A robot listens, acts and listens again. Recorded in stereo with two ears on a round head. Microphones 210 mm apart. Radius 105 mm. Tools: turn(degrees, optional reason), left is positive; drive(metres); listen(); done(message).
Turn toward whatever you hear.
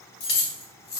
turn(degrees=45, reason="The keys jangling: about 45° left or 135° left.")
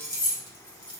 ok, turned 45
turn(degrees=25, reason="So it is at 25° left.")
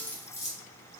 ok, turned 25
turn(degrees=15, reason="The keys jangling is now 15° left.")
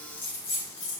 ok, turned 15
turn(degrees=30, reason="The keys jangling is now 30° left.")
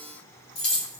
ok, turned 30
turn(degrees=25, reason="The keys jangling is now 25° left.")
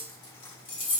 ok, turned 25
turn(degrees=25, reason="The keys jangling is now 25° left.")
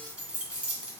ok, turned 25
done("Facing the keys jangling.")